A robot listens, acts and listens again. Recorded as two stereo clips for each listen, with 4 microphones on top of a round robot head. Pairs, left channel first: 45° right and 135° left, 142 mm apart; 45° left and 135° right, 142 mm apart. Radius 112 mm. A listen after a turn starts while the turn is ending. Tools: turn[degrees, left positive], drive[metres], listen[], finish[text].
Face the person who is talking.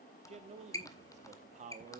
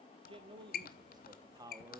Thought: The man speaking: 160° left.
Action: turn[160]
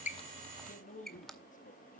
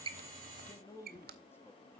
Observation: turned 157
Thought: The man speaking is now 35° right.
Action: turn[-35]
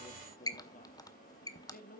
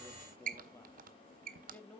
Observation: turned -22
Thought: The man speaking is now 35° right.
Action: turn[-35]
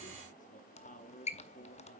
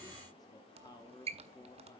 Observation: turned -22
Thought: The man speaking is now 20° right.
Action: turn[-20]
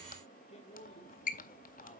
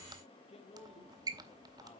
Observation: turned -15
Action: finish[Facing the man speaking.]